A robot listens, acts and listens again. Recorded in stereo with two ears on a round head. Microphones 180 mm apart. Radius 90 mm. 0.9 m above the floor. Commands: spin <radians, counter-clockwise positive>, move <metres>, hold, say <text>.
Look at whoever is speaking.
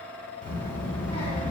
spin 0.44
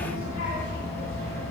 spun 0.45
spin 2.18
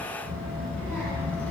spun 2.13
say Facing the child speaking.